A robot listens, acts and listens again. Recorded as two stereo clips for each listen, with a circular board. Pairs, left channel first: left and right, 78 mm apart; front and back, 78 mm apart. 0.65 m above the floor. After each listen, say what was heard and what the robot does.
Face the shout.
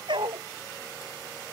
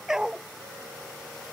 Keep listening.
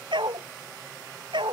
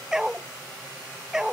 Keep listening.
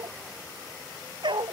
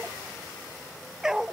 I can't make out a shout, only a dog barking.